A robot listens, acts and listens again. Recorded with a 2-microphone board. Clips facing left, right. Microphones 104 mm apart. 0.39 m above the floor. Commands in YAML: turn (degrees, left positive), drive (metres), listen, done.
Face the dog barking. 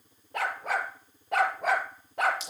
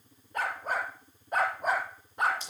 turn: 90
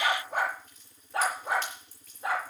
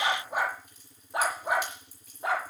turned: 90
turn: -20
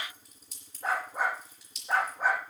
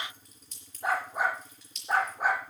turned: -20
turn: -10
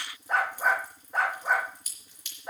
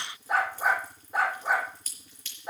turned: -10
done: "Facing the dog barking."